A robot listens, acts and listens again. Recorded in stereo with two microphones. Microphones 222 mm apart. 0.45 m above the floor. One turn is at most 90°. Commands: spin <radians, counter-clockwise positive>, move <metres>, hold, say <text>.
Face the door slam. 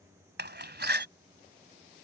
spin -0.87
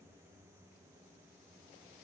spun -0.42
hold
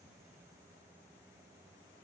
say I heard a door slam, but can't make it out now. It was about 25° right or 105° right.